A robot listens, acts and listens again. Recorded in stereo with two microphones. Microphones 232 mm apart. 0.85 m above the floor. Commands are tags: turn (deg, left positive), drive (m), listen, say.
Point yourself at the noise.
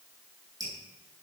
<turn deg="-15"/>
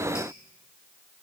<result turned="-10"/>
<listen/>
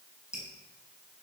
<say>Facing the dripping, over 4 m away.</say>